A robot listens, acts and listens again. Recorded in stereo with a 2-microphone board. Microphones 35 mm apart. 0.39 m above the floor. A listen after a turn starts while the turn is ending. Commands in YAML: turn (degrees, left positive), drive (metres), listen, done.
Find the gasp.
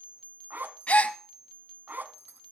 turn: 40
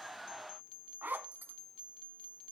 listen: true
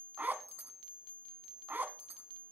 done: "I heard a gasp, but can't make it out now. It was about straight ahead or 100° left."